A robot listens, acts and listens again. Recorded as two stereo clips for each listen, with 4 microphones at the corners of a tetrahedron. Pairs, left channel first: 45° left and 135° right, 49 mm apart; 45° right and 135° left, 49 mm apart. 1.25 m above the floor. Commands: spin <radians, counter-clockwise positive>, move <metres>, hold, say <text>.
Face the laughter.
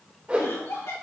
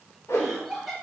spin 0.79
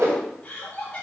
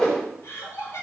spin -0.35
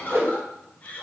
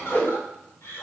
spin -0.26
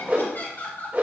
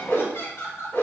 spin -0.17
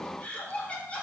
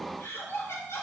spin -0.35
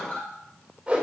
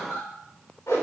spin -0.17
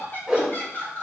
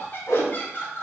say Found it: laughter, straight ahead, 2 to 4 m away.